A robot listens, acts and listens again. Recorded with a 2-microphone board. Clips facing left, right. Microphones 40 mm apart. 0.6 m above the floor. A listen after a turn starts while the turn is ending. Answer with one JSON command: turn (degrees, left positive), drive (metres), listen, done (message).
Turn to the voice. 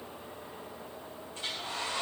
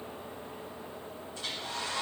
{"listen": true}
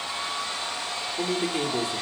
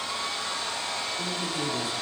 {"turn": 60}
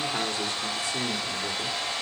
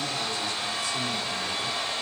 {"turn": 35}
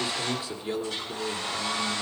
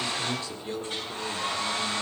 {"turn": 15}
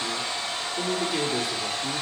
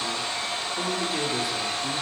{"done": "Found it: a man speaking, straight ahead, 1 to 2 m away."}